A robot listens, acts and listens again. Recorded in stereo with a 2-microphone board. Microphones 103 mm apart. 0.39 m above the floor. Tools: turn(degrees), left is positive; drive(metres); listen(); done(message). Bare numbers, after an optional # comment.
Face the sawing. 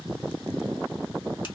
listen()
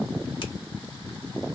listen()
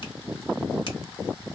done("I can't make out sawing to turn to.")